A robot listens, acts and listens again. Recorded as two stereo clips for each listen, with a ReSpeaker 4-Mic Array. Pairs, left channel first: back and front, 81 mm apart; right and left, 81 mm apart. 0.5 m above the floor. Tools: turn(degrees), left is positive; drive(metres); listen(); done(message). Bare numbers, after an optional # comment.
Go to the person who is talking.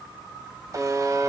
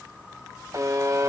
listen()
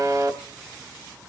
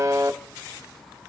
listen()
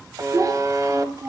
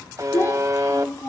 # The child speaking: 40° right.
turn(-40)
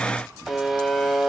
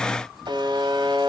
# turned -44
listen()
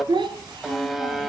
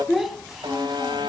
drive(1.0)
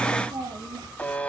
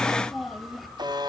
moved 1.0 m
drive(1.0)
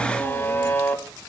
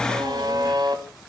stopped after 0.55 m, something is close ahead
listen()
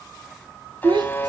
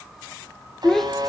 done("I am next to the child speaking.")